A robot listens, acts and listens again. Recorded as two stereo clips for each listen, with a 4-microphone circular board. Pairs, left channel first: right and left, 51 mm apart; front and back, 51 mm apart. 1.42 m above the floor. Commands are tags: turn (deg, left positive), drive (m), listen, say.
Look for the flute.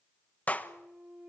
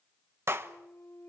<turn deg="35"/>
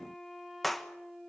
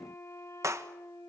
<say>Facing the flute, 2 to 4 m away.</say>